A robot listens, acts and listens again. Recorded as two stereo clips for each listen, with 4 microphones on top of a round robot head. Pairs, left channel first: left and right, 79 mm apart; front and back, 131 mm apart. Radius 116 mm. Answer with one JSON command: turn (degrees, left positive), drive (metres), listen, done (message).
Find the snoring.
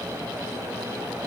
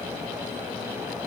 {"listen": true}
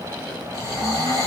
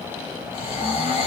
{"turn": -135}
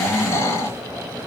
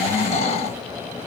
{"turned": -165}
{"turn": 35}
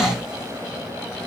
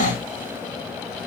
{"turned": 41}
{"done": "Found it: snoring, straight ahead, 2 to 4 m away."}